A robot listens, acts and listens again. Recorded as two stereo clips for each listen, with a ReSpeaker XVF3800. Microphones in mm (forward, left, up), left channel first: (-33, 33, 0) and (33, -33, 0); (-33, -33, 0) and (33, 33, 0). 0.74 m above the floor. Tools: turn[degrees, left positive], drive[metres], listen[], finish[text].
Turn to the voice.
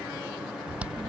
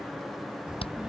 Thought: The child speaking: 35° right.
Action: turn[-35]
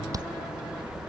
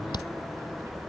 Action: finish[Found it: a child speaking, straight ahead.]